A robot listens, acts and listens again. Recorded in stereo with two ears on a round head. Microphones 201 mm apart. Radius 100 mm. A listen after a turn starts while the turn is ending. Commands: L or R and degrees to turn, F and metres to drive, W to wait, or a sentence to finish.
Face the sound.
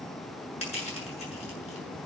L30
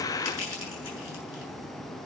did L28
L120
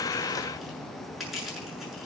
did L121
Facing the crushing.